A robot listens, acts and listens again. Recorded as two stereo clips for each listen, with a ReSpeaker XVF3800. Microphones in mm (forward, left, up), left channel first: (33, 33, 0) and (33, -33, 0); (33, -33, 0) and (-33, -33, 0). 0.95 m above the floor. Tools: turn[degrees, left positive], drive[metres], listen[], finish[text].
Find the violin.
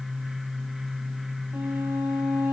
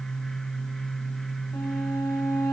Thought: The violin: 25° right.
Action: turn[-25]
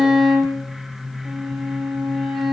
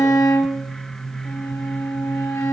Action: finish[Found it: a violin, straight ahead, 2 to 4 m away.]